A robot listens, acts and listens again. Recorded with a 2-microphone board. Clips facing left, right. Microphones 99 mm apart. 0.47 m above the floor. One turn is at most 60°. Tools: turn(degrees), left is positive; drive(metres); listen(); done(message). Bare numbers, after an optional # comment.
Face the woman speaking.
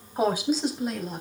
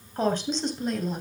turn(30)
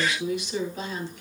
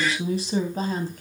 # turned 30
# So it is at 40° right.
turn(-40)
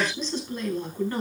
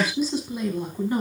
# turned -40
# The woman speaking is now 15° right.
turn(-15)
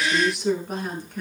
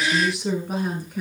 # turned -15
done("Facing the woman speaking.")